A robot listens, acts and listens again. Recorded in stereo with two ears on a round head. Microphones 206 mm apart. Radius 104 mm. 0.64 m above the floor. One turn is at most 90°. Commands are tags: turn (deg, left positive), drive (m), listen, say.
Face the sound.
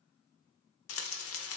<turn deg="60"/>
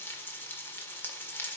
<turn deg="10"/>
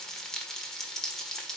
<say>Found it: frying, straight ahead, 1 to 2 m away.</say>